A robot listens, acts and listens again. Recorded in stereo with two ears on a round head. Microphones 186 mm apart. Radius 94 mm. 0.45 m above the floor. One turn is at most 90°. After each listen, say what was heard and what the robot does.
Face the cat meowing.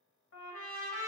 Keep listening.
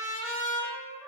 Keep listening.
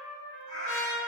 The cat meowing: about 35° left or 145° left. Turn 35° left.
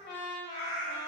So it is at 110° left. Turn 90° left.
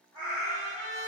The cat meowing is now 20° left. Turn 20° left.
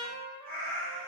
Facing the cat meowing.